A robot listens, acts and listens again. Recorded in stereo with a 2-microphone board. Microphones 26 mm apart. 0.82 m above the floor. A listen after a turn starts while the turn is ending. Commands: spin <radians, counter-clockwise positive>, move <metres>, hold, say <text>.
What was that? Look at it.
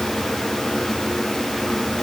hold
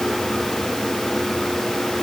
hold
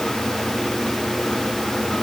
say I can't make out anything to turn to.